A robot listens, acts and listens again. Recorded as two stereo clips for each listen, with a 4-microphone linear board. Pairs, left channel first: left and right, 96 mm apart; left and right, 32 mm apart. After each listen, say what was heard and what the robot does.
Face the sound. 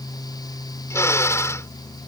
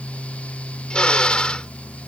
The drill: about 30° left or 150° left. Turn 30° left.
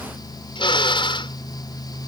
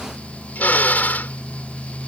So it is at 120° left. Turn 120° left.
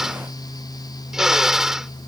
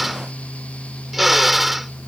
Found it: a drill, straight ahead.